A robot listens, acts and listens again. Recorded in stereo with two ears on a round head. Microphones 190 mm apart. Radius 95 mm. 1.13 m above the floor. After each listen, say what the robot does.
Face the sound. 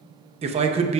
Turn 30° right.
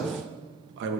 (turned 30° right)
Turn 120° right.
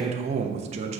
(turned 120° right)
Turn 30° right.
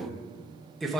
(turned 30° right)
Found it: a man speaking, straight ahead, under 1 m away.